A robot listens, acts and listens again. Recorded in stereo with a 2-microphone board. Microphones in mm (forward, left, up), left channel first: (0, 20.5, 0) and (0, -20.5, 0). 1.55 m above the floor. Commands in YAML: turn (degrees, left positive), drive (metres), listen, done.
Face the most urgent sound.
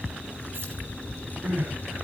turn: -60
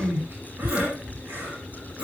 turn: -60
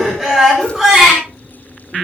turn: -10
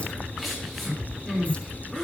done: "Found it: crying, straight ahead, over 4 m away."